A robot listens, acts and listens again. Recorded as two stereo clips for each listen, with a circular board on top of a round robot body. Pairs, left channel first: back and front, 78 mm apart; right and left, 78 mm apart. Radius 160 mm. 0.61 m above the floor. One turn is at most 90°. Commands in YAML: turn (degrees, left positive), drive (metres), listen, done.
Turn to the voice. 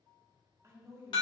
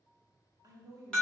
turn: 50
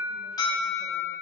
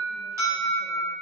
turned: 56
listen: true
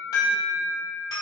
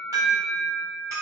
listen: true
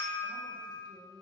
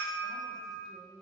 done: "Found it: a woman speaking, straight ahead, 1 to 2 m away."